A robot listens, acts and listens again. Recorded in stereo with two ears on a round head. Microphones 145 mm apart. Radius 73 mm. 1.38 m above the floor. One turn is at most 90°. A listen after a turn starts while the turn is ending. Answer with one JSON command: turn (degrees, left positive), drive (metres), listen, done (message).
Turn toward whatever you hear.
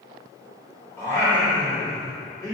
{"turn": 20}
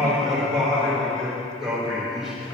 {"done": "Facing the singing, 2 to 4 m away."}